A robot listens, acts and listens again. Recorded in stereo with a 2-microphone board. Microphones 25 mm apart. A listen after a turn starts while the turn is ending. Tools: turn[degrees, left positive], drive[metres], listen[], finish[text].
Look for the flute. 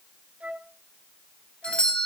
Thought: The flute: about 60° right or 120° right.
Action: turn[-60]
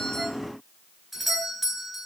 Action: listen[]
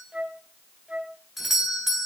Thought: So it is at 55° right.
Action: turn[-55]
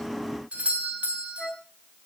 Thought: The flute is now 15° left.
Action: turn[15]
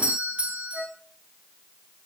Action: finish[Found it: a flute, straight ahead.]